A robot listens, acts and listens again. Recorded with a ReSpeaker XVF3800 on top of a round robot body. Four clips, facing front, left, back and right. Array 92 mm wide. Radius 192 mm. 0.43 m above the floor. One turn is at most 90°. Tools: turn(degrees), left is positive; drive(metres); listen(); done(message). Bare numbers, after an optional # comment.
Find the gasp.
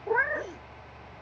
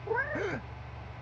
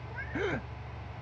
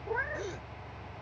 # The gasp: 145° left.
turn(90)
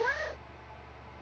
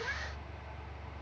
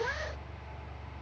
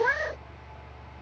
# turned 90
# Nothing new. It was at 55° left.
turn(55)
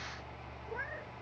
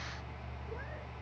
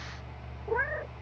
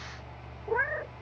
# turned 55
done("I heard a gasp from this way, but can't make it out now.")